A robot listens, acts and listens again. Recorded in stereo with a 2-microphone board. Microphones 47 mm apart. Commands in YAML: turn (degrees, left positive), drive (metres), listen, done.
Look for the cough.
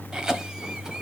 turn: -15
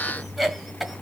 done: "Found it: a cough, straight ahead."